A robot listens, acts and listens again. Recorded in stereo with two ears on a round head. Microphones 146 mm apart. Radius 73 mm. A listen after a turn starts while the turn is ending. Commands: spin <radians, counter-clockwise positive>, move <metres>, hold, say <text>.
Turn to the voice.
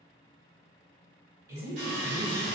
spin -0.35
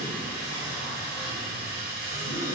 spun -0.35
hold
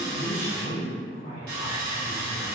spin -2.36
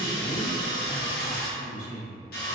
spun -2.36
spin 0.44
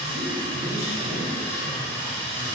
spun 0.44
spin -0.17
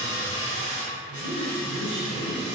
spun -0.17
say Found it: a woman speaking, straight ahead.